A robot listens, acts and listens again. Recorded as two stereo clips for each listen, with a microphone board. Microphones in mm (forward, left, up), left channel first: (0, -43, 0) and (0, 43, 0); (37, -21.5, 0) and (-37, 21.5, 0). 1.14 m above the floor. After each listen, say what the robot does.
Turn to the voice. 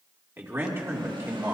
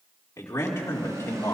Turn 30° left.
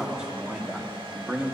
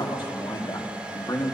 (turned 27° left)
Turn 15° left.
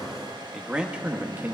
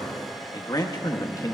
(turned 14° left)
Turn 20° left.
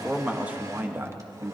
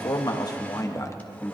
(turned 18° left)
Turn 35° left.
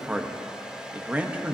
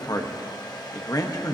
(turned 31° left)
Turn 15° left.
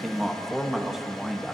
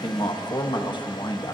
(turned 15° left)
Facing the man speaking.